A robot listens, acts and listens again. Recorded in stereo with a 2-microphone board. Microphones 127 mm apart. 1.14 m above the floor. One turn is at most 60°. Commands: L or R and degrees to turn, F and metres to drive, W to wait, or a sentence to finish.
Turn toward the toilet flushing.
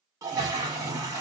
R25
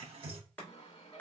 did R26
R60
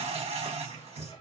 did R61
R60
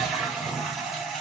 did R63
Found it: a toilet flushing, straight ahead, under 1 m away.